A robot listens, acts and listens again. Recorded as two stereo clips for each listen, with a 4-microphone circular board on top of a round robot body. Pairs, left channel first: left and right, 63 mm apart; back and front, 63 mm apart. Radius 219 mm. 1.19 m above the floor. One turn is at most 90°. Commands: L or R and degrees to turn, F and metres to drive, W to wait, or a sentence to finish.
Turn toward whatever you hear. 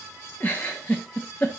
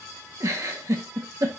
L30
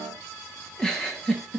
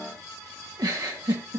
L10
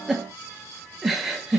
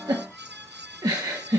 Found it: a giggle, straight ahead, 1 to 2 m away.